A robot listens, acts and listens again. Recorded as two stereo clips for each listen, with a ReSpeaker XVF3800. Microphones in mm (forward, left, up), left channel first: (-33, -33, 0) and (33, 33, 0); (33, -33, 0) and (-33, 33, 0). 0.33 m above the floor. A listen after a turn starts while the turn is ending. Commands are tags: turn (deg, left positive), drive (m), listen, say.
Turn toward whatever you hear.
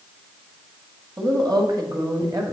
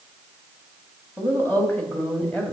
<turn deg="30"/>
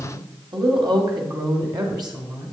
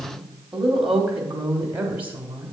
<turn deg="70"/>
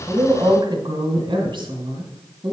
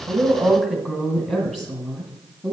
<turn deg="30"/>
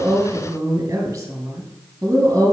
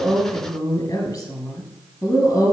<turn deg="-10"/>
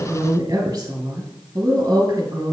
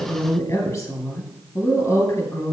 <say>Facing the woman speaking.</say>